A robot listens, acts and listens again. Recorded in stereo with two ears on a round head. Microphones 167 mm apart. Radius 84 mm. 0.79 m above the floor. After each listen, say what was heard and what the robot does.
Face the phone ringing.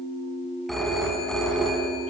Turn 30° left.
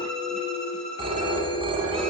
So it is at 30° right. Turn 30° right.
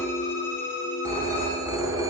The phone ringing is now 20° right. Turn 20° right.
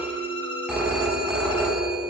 Facing the phone ringing, over 4 m away.